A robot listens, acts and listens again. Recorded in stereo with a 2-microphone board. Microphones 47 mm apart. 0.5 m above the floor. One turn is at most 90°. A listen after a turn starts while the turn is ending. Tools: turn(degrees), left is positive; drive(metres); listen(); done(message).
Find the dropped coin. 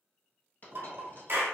turn(degrees=40)
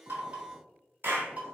listen()
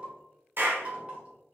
done("I heard a dropped coin, but can't make it out now. It was about straight ahead or 100° left.")